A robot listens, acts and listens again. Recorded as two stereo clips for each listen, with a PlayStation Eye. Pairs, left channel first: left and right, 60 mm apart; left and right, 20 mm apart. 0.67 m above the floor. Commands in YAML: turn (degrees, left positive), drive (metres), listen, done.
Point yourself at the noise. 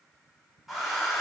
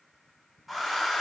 turn: -30
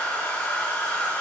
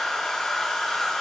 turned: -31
turn: 25
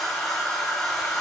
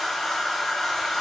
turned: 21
done: "Found it: a hair dryer, straight ahead."